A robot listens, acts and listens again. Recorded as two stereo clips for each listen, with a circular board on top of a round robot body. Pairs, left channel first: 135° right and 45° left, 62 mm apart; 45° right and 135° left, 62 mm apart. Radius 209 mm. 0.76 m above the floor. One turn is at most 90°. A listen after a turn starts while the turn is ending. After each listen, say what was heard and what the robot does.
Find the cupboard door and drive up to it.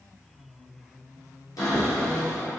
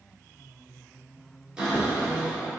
The cupboard door: 150° right. Turn 90° right.
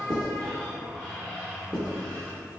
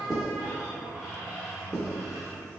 The cupboard door is now 65° right. Turn 65° right.
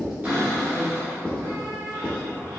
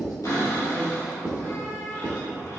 Drive 1.0 m forward.
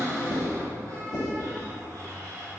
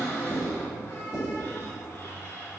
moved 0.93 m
Drive 1.0 m forward.
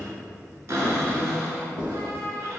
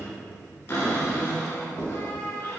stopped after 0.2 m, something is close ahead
I am next to the cupboard door.